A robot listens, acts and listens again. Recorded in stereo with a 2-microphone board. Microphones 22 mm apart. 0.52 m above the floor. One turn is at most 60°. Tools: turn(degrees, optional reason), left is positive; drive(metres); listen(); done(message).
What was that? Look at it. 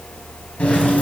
turn(degrees=60)
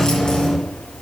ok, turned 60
turn(degrees=35, reason="So it is at 35° left.")
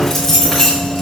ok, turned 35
turn(degrees=15, reason="The keys jangling is now 15° left.")
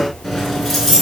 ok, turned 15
done("Facing the keys jangling, over 4 m away.")